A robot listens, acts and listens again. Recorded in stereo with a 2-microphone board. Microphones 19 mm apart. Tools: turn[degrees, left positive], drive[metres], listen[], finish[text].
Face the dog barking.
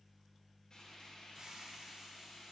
Action: listen[]
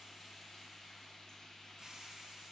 Action: listen[]
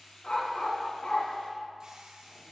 Thought: The dog barking: about 60° left or 120° left.
Action: turn[60]
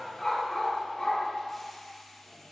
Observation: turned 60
Thought: So it is at 25° left.
Action: turn[25]
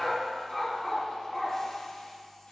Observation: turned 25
Thought: The dog barking is now 10° left.
Action: turn[10]
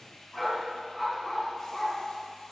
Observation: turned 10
Action: finish[Found it: a dog barking, straight ahead, 2 to 4 m away.]